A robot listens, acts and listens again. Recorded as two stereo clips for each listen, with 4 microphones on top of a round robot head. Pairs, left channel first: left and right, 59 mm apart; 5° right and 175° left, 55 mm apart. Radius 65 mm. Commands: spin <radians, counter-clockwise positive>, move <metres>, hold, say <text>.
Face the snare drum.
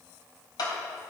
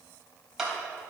hold
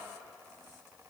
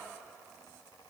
hold
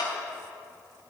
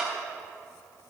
say I can't make out a snare drum, only a clap.